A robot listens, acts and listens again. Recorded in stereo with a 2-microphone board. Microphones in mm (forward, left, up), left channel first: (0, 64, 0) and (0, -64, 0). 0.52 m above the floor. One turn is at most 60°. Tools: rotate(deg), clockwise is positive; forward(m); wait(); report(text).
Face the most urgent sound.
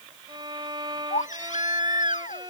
rotate(-60)
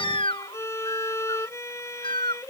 rotate(-40)
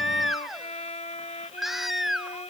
report("Facing the baby crying.")